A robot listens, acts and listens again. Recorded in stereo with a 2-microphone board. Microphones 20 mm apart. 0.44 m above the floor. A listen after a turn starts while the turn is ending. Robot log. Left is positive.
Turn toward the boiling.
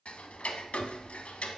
cmd idle
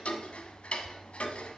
cmd idle
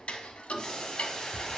note: The boiling: about 45° left or 135° left.
cmd yaw +45
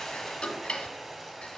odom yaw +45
end: Found it: boiling, straight ahead.